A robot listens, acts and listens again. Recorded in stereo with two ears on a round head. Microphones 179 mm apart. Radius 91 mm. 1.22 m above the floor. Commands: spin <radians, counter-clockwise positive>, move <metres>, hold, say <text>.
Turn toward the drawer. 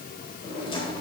spin 0.44
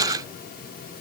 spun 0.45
hold
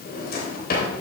spin 2.18
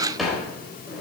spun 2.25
say Facing the drawer, 2 to 4 m away.